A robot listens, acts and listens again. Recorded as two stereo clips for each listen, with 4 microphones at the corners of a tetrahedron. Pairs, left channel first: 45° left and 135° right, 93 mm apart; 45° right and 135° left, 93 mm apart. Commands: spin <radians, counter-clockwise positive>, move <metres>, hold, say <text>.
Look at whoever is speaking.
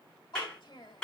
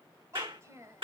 spin 1.40
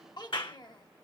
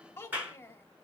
spin 0.26
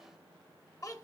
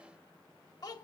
say Facing the child speaking.